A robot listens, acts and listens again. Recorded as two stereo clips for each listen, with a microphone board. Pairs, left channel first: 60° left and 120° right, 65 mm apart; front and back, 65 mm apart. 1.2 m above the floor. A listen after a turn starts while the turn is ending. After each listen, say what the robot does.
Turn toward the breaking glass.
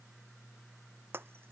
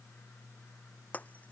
Turn 65° right.
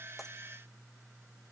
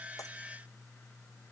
I heard breaking glass from this way, but can't make it out now.